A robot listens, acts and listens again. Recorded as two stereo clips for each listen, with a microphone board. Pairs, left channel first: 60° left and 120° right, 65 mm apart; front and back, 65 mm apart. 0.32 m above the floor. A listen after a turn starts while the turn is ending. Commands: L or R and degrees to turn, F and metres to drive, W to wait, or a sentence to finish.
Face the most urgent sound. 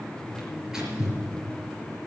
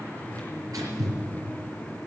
W
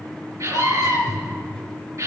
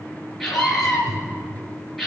R90
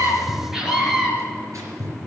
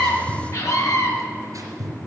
R40
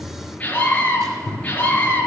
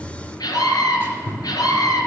R10
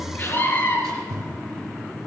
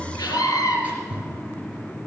Found it: a scream, straight ahead, over 4 m away.